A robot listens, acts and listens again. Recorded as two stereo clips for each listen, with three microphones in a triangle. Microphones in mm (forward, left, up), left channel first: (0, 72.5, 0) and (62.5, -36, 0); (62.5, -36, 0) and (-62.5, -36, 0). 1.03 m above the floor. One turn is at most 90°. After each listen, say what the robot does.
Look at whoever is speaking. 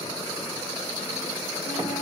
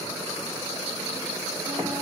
Keep listening.
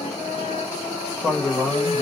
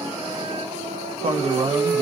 Turn 90° right.
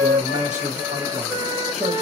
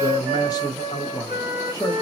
Turn 60° right.
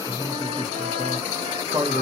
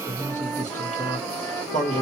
Facing the man speaking, 1 to 2 m away.